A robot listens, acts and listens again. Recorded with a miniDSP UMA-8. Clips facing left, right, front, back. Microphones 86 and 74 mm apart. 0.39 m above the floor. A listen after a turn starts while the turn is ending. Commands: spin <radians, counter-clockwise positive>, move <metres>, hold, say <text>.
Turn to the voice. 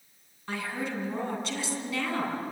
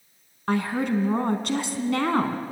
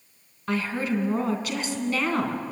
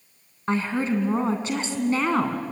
spin -2.09
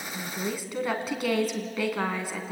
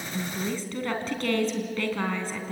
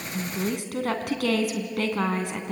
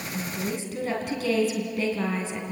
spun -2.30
spin 0.17
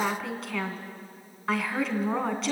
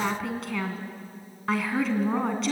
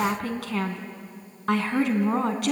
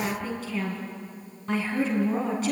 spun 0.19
say Found it: a woman speaking, straight ahead, 2 to 4 m away.